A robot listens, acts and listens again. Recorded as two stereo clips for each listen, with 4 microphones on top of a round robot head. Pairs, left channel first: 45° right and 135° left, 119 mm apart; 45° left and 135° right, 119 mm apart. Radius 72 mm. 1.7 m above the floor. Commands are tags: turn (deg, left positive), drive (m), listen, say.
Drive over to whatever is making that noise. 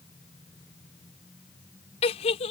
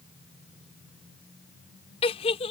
<drive m="1.0"/>
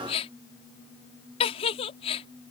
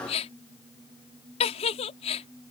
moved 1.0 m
<drive m="1.0"/>
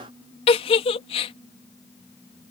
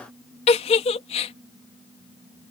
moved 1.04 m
<drive m="1.0"/>
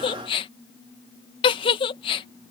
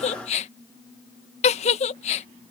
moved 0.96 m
<drive m="1.0"/>
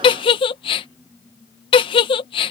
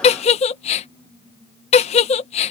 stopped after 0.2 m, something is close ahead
<say>Arrived at the giggle, straight ahead.</say>